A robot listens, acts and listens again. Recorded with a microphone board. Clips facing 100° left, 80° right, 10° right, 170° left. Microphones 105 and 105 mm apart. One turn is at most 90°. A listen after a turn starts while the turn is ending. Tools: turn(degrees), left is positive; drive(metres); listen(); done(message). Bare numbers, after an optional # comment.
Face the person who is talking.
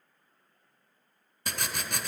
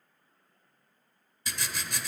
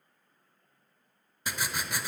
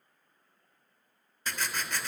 listen()
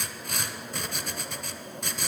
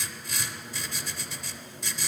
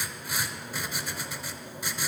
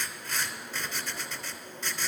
listen()
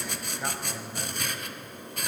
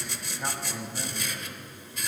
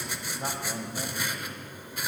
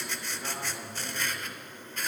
# The man speaking: 15° left.
turn(15)
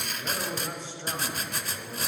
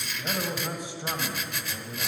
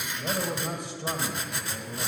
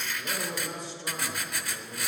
done("Facing the man speaking, 2 to 4 m away.")